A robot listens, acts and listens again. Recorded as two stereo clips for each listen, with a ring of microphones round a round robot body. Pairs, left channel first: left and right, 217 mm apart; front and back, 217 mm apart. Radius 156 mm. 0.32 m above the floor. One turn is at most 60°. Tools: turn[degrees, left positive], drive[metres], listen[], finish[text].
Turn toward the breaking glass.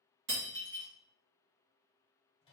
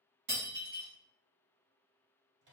Thought: The breaking glass: 130° right.
Action: turn[-60]
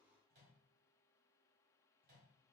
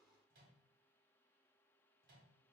Thought: Nothing new. It was at 70° right.
Action: turn[-60]
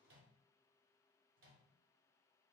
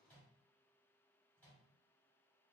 Thought: Nothing new. It was at 10° right.
Action: turn[-10]
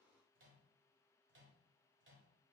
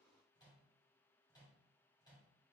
Action: finish[Facing where the breaking glass came from. I can't hear it now.]